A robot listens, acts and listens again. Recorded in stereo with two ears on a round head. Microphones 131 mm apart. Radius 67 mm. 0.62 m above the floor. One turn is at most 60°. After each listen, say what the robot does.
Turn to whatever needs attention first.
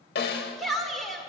Turn 30° left.
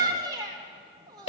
Turn 30° right.
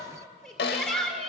Found it: a shout, straight ahead.